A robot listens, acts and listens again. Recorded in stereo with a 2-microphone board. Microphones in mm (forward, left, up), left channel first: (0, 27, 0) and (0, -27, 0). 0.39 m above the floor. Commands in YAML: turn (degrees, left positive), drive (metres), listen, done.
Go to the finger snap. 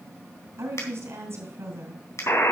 turn: 65
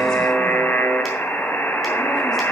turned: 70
listen: true
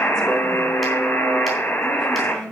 listen: true
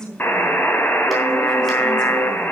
done: "I heard a finger snap, but can't make it out now. It was about 5° right or 45° left. I did not reach it."